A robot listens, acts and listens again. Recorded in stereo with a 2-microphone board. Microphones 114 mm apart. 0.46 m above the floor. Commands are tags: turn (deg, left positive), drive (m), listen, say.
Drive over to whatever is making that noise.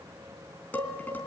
<turn deg="30"/>
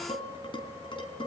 <turn deg="135"/>
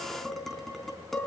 <drive m="1.0"/>
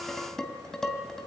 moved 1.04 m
<drive m="1.0"/>
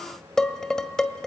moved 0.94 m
<drive m="1.0"/>
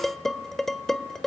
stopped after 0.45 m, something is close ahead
<say>Arrived at the dishes clattering, straight ahead.</say>